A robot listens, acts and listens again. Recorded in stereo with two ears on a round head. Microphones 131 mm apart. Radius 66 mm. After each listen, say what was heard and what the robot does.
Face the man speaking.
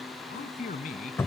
The man speaking: about 55° left or 125° left. Turn 55° left.
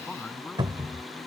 Found it: a man speaking, straight ahead.